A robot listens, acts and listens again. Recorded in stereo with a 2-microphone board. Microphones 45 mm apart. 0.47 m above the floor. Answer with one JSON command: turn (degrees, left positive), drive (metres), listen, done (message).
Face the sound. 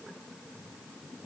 {"listen": true}
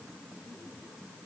{"listen": true}
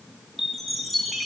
{"turn": 30}
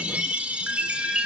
{"turn": -25}
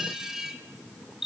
{"turn": -10}
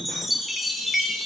{"done": "Facing the chime."}